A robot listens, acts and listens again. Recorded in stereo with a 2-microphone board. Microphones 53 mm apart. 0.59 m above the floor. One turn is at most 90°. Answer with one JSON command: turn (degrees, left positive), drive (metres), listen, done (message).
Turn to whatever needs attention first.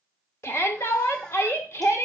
{"turn": 55}
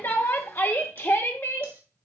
{"turn": 55}
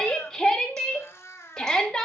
{"turn": 10}
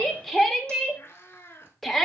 {"done": "Facing the shout."}